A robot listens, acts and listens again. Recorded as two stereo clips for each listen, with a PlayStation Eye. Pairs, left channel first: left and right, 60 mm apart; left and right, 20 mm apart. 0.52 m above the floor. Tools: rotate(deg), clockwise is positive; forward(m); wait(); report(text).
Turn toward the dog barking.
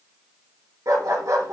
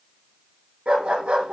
rotate(75)
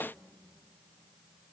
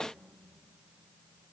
wait()
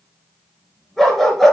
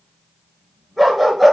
report("Found it: a dog barking, straight ahead.")